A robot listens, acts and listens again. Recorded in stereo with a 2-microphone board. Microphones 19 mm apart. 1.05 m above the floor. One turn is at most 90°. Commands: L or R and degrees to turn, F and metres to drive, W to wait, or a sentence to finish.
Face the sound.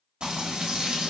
R65
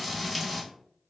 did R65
Found it: frying, straight ahead.